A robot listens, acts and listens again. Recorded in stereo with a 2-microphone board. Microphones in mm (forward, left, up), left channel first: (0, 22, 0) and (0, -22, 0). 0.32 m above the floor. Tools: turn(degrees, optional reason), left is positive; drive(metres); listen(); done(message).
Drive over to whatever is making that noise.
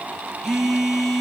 turn(degrees=-30)
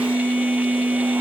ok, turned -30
turn(degrees=-140, reason="So it is at 140° right.")
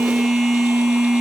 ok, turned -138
drive(metres=1.0)
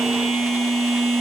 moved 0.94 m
drive(metres=1.0)
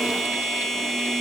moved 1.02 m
drive(metres=1.0)
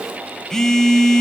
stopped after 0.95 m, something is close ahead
turn(degrees=15, reason="The phone buzzing is now 15° left.")
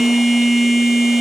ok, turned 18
done("I am next to the phone buzzing.")